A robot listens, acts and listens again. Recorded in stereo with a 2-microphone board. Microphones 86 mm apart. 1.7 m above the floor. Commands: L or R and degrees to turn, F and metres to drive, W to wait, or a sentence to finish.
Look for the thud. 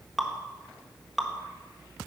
W
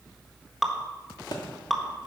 L55
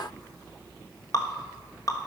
W
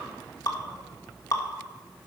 I heard a thud, but can't make it out now. It was about straight ahead or 70° left.